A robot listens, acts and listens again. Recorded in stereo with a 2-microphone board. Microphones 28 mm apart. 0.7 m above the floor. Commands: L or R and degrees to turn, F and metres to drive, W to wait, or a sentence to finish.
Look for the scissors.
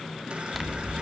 L30
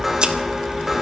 R35
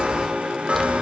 W
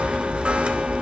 Facing the scissors, 1 to 2 m away.